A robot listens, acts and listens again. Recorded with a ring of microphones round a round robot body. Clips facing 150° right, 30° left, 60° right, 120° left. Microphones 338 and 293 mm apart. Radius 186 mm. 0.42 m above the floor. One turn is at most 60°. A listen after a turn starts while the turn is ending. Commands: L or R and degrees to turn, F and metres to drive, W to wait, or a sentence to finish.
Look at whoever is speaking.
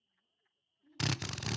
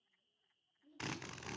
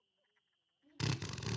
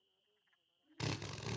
R60
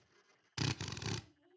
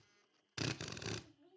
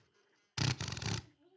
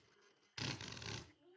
R20
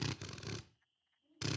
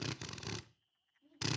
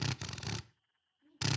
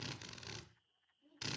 Facing the child speaking.